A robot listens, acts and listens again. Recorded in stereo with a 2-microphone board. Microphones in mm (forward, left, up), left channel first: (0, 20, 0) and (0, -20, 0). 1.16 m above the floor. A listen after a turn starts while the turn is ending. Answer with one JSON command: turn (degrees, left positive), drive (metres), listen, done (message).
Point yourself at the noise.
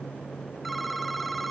{"turn": 30}
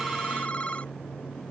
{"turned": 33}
{"turn": 145}
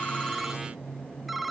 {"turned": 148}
{"done": "Facing the phone ringing."}